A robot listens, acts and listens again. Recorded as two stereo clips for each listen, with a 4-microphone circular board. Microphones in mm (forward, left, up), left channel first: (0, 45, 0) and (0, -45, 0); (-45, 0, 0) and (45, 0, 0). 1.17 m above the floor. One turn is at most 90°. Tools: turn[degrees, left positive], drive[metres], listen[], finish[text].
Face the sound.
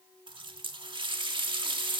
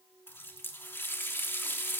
Thought: The running tap: 115° right.
Action: turn[-90]
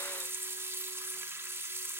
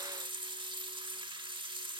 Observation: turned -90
Thought: The running tap is now 25° right.
Action: turn[-25]
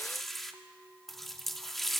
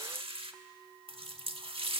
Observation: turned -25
Action: finish[Facing the running tap.]